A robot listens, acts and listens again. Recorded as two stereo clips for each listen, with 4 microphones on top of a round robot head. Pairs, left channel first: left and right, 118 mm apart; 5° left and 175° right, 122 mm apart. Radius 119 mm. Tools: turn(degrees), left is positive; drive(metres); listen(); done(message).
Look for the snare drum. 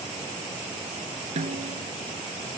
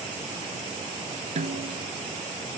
turn(degrees=-130)
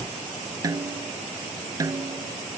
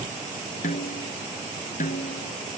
turn(degrees=-30)
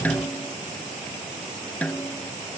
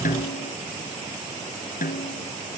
turn(degrees=15)
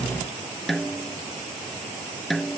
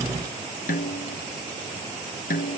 done("Found it: a snare drum, straight ahead.")